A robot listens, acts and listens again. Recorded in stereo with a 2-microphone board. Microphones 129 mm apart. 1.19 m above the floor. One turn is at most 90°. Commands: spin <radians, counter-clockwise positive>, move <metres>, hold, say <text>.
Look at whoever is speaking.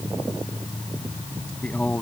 spin 0.52
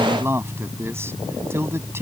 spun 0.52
spin -0.35
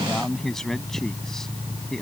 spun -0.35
say Facing the man speaking.